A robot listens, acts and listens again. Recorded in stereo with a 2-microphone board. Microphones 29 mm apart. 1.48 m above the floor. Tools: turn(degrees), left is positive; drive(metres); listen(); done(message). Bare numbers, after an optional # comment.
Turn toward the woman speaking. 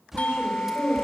# The woman speaking: about 55° right or 125° right.
turn(-55)
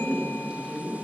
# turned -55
# So it is at 10° right.
turn(-10)
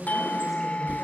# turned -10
done("Found it: a woman speaking, straight ahead.")